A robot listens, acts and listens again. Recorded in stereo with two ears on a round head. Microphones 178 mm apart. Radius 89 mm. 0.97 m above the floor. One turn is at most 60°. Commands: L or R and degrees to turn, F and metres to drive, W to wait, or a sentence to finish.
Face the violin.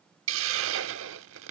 W
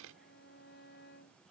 L55
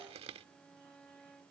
Found it: a violin, straight ahead.